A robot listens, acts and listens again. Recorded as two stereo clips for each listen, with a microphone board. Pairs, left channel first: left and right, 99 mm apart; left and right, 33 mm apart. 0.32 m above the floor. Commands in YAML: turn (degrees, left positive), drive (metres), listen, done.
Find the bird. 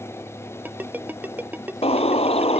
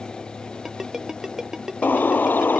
turn: 90
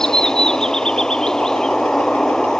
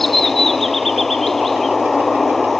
done: "Found it: a bird, straight ahead."